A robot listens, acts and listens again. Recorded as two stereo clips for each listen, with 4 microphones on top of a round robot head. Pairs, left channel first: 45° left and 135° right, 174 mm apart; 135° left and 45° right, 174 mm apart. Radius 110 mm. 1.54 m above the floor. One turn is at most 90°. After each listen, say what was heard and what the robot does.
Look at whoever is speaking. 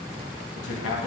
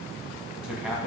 The man speaking: 40° left. Turn 40° left.
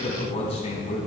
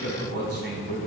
The man speaking is now 15° right. Turn 15° right.
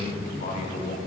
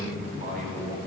Facing the man speaking.